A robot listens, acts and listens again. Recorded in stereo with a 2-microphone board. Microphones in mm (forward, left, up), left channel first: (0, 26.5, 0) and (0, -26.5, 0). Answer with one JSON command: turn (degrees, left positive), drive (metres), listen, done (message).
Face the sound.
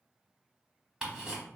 {"turn": -15}
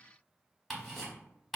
{"done": "Facing the ticking, under 1 m away."}